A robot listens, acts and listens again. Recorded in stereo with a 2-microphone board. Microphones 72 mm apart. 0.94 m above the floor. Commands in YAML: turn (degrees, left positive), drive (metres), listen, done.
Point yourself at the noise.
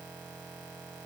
listen: true
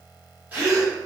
turn: -25
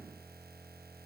listen: true
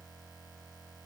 done: "I heard a gasp, but can't make it out now. It was about straight ahead or 130° right."